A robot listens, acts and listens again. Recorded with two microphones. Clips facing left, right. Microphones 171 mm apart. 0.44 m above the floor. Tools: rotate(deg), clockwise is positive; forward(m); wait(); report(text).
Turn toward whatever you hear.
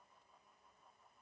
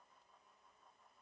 wait()
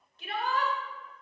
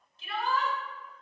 rotate(-60)
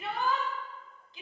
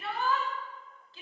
rotate(-20)
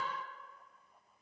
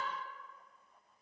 wait()
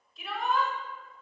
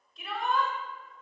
report("Facing the shout, 1 to 2 m away.")